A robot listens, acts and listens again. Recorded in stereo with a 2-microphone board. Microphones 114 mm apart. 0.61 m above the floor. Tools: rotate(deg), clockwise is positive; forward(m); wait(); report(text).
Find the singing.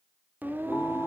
rotate(20)
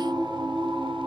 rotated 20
rotate(130)
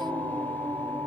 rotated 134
rotate(-20)
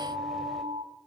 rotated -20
wait()
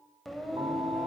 report("Found it: singing, straight ahead.")